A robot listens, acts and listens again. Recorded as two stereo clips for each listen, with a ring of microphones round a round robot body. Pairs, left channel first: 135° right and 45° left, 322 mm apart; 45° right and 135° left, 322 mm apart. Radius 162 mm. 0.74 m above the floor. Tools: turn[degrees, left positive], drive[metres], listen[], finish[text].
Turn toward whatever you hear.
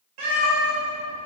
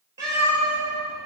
Thought: The cat meowing: 50° left.
Action: turn[50]
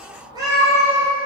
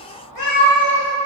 Thought: The cat meowing is now 45° right.
Action: turn[-45]
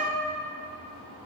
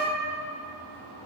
Action: listen[]
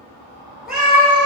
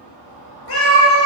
Thought: The cat meowing is now 50° right.
Action: turn[-50]
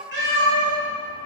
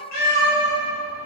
Thought: The cat meowing is now 10° right.
Action: turn[-10]
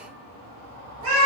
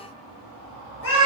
Action: finish[Found it: a cat meowing, straight ahead, 1 to 2 m away.]